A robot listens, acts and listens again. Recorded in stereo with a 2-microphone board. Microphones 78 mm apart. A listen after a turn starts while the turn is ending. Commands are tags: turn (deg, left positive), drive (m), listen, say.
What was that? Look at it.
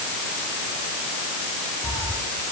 <turn deg="55"/>
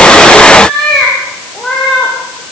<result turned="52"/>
<say>Found it: a cat meowing, straight ahead.</say>